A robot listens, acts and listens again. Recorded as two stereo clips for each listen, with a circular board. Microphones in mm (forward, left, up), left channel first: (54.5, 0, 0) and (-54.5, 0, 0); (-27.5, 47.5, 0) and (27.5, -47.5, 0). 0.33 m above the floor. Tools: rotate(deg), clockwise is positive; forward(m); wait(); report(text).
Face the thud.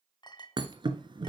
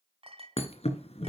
rotate(-135)
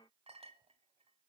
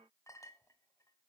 report("Facing where the thud came from. I can't hear it now.")